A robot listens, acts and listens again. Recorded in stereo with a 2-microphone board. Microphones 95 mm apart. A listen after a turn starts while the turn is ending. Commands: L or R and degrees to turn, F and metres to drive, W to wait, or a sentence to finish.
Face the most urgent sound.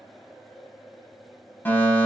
L20
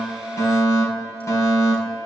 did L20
L135
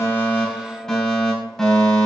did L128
Facing the fire alarm.